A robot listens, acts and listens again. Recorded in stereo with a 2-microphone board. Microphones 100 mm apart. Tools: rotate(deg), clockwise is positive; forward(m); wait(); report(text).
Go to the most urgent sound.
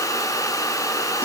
wait()
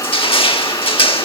wait()
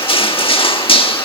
report("I can't make out anything urgent to turn to.")